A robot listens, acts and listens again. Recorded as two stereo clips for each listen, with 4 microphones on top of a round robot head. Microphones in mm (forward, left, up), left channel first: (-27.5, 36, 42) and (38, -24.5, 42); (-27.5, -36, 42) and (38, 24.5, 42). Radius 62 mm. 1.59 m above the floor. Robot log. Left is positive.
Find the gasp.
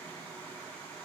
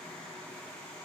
cmd idle
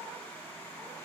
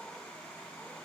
cmd idle
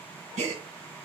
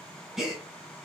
note: The gasp: 40° right.
cmd yaw -40
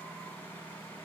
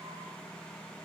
end: I heard a gasp from this way, but can't make it out now.